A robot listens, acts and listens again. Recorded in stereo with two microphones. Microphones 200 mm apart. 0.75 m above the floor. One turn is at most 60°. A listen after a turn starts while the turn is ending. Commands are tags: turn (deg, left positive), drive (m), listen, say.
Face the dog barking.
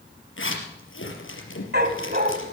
<turn deg="-55"/>
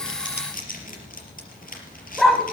<say>Found it: a dog barking, straight ahead, 1 to 2 m away.</say>